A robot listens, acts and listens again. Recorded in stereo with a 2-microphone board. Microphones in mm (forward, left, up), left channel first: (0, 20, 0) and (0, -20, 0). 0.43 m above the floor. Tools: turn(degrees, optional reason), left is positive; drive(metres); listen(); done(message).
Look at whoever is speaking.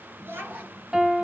turn(degrees=-70, reason="The child speaking: about 70° right or 110° right.")
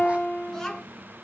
turn(degrees=10, reason="So it is at 10° left.")
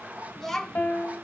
turn(degrees=10, reason="The child speaking is now 10° left.")
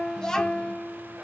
turn(degrees=15, reason="The child speaking is now 15° left.")
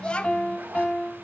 turn(degrees=30, reason="The child speaking is now 30° left.")
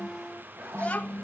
turn(degrees=30, reason="The child speaking is now 30° left.")
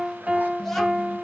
done("Facing the child speaking, 1 to 2 m away.")